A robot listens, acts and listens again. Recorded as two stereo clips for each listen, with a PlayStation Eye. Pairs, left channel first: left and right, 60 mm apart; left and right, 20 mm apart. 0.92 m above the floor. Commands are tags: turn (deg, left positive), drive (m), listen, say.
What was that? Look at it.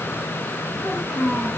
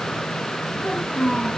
<turn deg="-25"/>
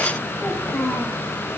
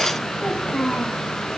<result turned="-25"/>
<turn deg="10"/>
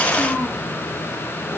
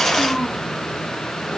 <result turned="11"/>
<say>Facing the child speaking.</say>